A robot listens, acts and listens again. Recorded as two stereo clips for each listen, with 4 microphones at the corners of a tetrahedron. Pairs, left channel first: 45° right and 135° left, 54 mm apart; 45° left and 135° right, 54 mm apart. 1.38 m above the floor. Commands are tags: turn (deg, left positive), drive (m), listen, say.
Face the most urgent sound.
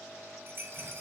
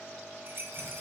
<listen/>
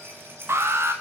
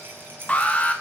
<turn deg="110"/>
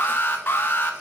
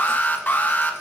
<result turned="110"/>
<say>Found it: an alarm, straight ahead, under 1 m away.</say>